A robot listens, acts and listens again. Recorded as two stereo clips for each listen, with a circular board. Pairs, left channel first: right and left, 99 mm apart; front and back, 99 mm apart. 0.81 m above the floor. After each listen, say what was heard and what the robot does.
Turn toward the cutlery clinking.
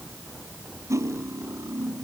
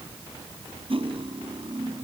The cutlery clinking: 150° left. Turn 150° left.
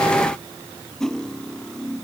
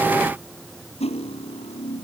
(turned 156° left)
Facing the cutlery clinking.